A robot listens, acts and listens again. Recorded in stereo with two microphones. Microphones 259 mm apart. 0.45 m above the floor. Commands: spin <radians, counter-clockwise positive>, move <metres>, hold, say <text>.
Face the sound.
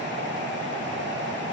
hold
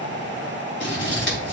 spin 0.87
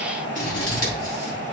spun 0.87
spin 1.31
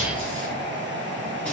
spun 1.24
hold
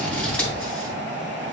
say Found it: scissors, straight ahead.